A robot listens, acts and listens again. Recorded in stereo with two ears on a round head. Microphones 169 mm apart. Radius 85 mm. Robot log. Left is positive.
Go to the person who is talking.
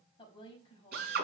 note: The woman speaking: about 25° left or 155° left.
cmd yaw +25
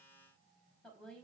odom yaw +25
cmd fwd 1.0
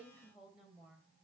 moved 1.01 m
cmd fwd 1.0
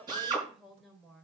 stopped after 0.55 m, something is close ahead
end: Blocked. The woman speaking is further on, straight ahead.